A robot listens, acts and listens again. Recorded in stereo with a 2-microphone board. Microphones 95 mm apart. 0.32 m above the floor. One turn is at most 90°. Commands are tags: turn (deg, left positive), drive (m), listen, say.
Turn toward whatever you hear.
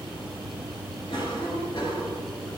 <turn deg="60"/>
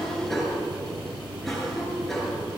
<say>Found it: a cough, straight ahead, over 4 m away.</say>